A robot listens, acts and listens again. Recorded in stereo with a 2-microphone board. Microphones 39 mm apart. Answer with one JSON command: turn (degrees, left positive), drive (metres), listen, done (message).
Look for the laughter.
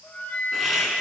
{"turn": -30}
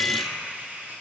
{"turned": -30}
{"turn": -140}
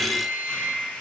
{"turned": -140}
{"listen": true}
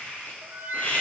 {"turn": 40}
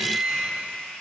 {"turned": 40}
{"turn": 20}
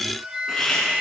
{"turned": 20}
{"turn": 15}
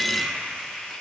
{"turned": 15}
{"done": "Found it: laughter, straight ahead, 2 to 4 m away."}